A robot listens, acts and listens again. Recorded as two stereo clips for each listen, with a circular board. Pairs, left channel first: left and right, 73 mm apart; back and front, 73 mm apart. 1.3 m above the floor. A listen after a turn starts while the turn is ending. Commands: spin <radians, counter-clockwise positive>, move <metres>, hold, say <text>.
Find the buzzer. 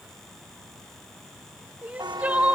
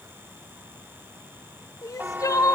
spin -1.13
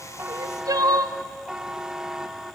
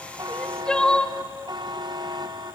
spin -0.17
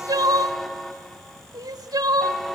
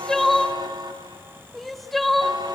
say Found it: a buzzer, straight ahead, 1 to 2 m away.